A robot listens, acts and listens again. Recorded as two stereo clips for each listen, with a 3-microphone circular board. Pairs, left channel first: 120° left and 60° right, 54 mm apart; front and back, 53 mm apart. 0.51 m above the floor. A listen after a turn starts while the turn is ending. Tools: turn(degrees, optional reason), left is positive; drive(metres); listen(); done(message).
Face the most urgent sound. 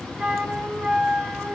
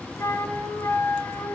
listen()
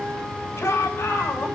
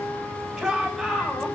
turn(degrees=100, reason="The shout: 100° left.")
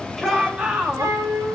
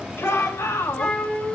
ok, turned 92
done("Found it: a shout, straight ahead.")